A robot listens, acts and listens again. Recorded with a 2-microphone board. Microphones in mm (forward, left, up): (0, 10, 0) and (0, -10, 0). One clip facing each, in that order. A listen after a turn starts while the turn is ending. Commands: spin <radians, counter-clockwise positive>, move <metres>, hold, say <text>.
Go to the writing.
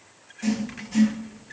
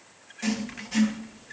spin -0.52
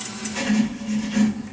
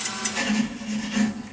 move 1.0
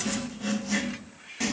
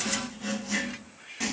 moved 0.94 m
move 1.0
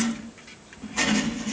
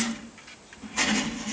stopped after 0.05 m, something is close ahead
say I am next to the writing.